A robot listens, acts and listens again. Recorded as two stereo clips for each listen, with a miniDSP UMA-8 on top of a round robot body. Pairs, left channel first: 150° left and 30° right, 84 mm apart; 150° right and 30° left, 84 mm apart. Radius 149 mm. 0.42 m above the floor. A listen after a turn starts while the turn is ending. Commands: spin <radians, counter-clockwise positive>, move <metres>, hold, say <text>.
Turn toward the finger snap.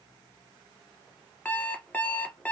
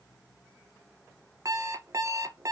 hold
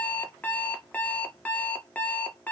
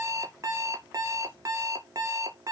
hold
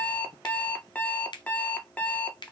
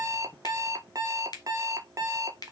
spin 3.05
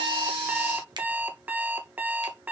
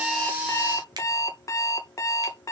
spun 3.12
hold
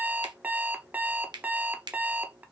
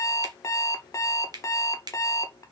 say Found it: a finger snap, straight ahead.